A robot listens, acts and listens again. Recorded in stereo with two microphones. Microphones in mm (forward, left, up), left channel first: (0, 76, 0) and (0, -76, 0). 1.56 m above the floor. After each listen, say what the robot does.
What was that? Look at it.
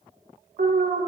Turn 65° right.
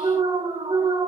Turn 35° right.
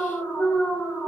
Facing the alarm, 1 to 2 m away.